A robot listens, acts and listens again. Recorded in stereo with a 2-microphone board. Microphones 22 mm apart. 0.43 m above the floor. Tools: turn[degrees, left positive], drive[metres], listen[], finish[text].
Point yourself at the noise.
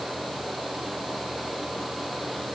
Action: listen[]
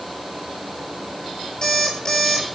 Thought: The alarm clock: about 25° left or 155° left.
Action: turn[25]
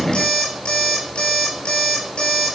Thought: So it is at 135° left.
Action: turn[135]
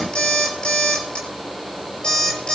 Thought: The alarm clock is now 55° left.
Action: turn[55]
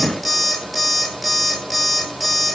Thought: The alarm clock is now 10° left.
Action: turn[10]
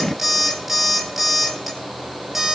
Action: finish[Found it: an alarm clock, straight ahead, over 4 m away.]